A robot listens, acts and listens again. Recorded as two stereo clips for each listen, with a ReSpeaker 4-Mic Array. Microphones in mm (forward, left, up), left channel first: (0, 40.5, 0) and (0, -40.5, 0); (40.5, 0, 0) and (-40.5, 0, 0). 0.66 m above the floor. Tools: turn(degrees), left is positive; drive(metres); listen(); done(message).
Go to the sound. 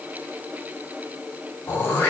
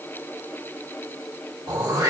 turn(degrees=150)
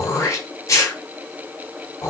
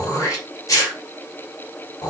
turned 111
turn(degrees=40)
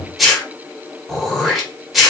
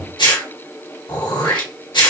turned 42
drive(metres=1.0)
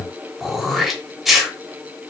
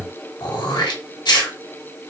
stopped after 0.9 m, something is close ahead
done("Arrived at the throat clearing, straight ahead.")